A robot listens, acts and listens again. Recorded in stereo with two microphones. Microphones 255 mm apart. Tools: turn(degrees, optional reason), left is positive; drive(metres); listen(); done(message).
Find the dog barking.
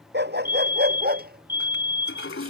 turn(degrees=-40, reason="The dog barking: about 40° right or 140° right.")
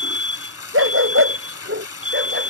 turn(degrees=-125, reason="So it is at 125° right.")
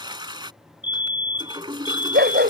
turn(degrees=-45, reason="The dog barking is now 45° right.")
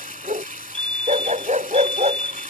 turn(degrees=-30, reason="The dog barking is now 30° right.")
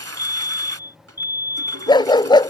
turn(degrees=20, reason="The dog barking is now 20° left.")
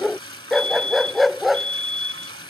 done("Found it: a dog barking, straight ahead.")